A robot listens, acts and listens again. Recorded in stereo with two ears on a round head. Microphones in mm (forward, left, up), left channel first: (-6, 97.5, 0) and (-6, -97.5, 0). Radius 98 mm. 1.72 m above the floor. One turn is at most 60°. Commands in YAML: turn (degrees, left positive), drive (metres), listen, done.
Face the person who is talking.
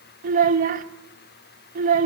turn: -35
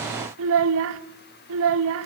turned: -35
turn: -60
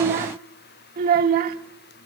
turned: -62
turn: -45
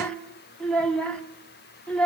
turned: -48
done: "Facing the child speaking."